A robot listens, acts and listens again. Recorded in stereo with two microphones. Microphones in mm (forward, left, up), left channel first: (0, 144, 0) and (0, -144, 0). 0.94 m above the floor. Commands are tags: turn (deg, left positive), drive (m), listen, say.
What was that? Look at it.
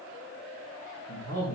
<turn deg="-65"/>
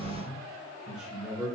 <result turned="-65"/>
<say>Facing the man speaking, 2 to 4 m away.</say>